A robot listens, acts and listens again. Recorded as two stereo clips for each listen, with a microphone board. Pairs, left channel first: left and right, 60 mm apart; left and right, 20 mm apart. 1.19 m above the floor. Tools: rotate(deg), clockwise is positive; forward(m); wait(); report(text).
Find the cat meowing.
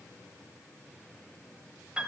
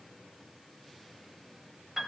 wait()
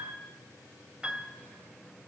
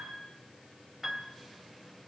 wait()
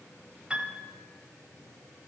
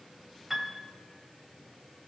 report("I can't make out a cat meowing to turn to.")